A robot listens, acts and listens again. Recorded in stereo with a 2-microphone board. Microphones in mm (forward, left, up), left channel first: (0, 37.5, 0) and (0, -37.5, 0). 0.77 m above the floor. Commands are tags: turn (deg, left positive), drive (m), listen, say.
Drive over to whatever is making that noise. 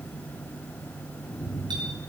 <listen/>
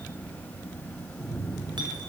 <listen/>
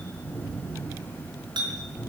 <turn deg="-65"/>
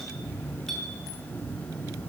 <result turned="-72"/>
<listen/>
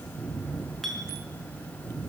<drive m="1.0"/>
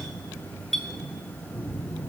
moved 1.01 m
<drive m="1.0"/>
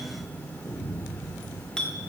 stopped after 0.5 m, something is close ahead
<turn deg="10"/>
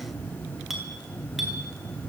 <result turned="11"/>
<say>Something is in my way. I am facing the clink but have not reached it.</say>